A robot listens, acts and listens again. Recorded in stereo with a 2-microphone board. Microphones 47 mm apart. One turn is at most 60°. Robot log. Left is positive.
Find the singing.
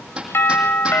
cmd idle
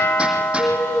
note: The singing: about 40° left or 140° left.
cmd yaw +40
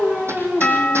end: Facing the singing, over 4 m away.